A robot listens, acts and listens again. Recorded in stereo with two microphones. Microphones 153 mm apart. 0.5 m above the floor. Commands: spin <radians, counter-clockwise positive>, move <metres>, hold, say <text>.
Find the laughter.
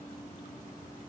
hold
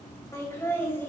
spin 0.52
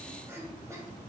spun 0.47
spin -0.35
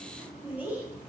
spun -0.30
spin -0.17
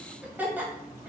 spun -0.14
spin -0.17
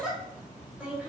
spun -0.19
spin -0.17
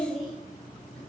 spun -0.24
say Facing the laughter, 2 to 4 m away.